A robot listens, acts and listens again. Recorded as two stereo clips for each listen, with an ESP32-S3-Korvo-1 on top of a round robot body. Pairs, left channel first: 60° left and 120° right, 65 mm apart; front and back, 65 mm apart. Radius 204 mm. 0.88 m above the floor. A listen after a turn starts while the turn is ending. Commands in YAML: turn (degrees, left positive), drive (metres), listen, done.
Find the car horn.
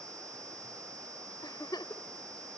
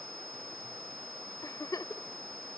listen: true
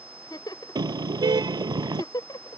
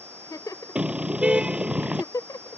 turn: -105
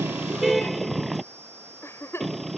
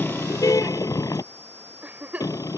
turn: -30
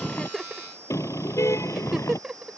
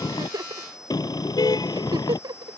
turn: 15
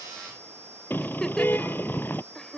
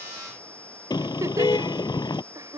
done: "Found it: a car horn, straight ahead."